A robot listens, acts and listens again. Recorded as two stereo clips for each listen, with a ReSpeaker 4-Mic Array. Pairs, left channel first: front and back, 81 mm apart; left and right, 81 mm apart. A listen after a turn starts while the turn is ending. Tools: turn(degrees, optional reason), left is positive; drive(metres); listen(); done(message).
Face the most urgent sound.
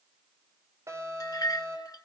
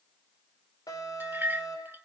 turn(degrees=130, reason="The alarm: 130° left.")
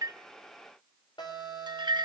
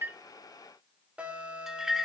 turn(degrees=-15, reason="The alarm is now 15° right.")
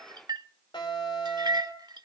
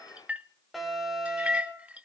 done("Facing the alarm, 2 to 4 m away.")